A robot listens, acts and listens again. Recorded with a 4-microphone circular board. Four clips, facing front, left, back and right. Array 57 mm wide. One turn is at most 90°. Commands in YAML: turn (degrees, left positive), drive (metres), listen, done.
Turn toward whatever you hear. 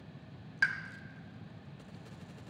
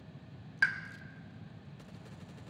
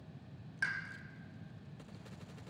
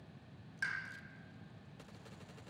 turn: 60
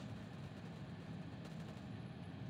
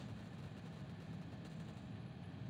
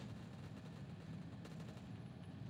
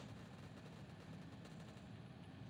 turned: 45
turn: 15
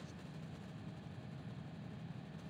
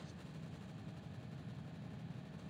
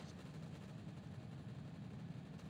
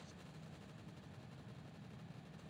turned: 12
done: "I heard a pop from this way, but can't make it out now."